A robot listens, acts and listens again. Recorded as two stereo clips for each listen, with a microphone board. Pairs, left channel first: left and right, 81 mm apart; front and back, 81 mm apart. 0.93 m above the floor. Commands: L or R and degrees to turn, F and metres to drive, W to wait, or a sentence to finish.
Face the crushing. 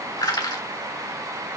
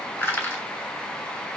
L65
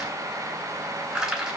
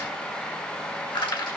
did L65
Found it: crushing, straight ahead.